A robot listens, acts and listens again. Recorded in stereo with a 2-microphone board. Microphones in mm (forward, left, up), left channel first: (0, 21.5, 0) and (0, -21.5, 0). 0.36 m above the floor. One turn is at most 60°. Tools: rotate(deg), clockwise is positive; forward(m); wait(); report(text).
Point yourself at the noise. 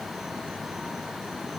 wait()
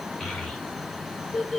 rotate(-30)
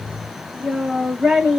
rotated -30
rotate(20)
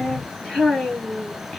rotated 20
report("Found it: a child speaking, straight ahead.")